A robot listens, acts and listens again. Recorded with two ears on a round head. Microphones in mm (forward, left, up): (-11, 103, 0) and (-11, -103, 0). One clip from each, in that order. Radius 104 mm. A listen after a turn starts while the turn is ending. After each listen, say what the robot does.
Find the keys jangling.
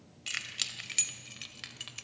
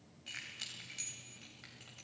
Turn 70° left.
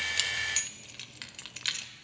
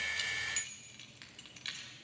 Turn 35° left.
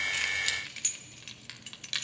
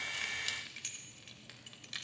Turn 30° left.
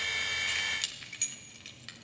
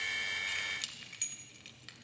Facing the keys jangling, 1 to 2 m away.